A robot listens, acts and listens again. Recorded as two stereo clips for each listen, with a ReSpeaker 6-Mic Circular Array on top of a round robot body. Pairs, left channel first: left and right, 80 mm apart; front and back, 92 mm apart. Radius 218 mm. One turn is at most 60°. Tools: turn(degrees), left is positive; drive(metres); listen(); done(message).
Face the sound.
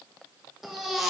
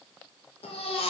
done("Facing the baby crying.")